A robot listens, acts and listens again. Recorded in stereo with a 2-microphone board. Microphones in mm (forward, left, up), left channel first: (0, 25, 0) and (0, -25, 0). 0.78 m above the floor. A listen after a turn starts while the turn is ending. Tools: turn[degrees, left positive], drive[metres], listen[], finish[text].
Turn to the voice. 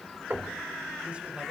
Action: listen[]
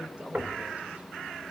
Thought: The man speaking: about 25° right or 155° right.
Action: turn[-25]
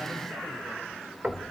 Action: listen[]
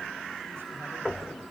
Action: listen[]
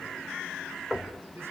Action: finish[I heard a man speaking, but can't make it out now. It was about straight ahead or 130° right.]